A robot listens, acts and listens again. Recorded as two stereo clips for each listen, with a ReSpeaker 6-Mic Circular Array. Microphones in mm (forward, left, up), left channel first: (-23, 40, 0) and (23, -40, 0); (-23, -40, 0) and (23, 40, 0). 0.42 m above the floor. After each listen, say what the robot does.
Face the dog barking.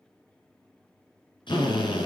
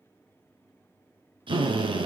Keep listening.
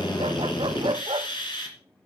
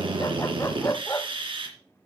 Turn 70° right.
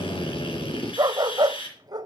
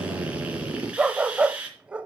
Turn 20° right.
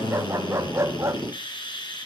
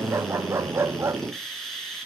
Facing the dog barking, under 1 m away.